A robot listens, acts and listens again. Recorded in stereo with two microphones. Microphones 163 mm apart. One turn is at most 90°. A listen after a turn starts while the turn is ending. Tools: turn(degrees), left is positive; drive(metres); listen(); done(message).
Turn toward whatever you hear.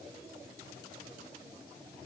listen()
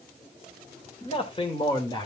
turn(degrees=30)
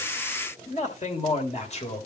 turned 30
turn(degrees=40)
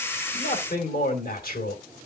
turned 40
turn(degrees=90)
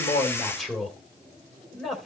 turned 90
done("Found it: a man speaking, straight ahead, 2 to 4 m away.")